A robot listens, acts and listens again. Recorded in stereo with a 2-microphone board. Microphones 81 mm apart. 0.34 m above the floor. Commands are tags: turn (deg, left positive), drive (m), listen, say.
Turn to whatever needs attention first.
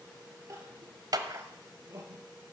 <turn deg="-40"/>
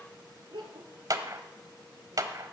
<turn deg="-100"/>
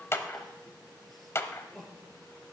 <say>Found it: crying, straight ahead, 2 to 4 m away.</say>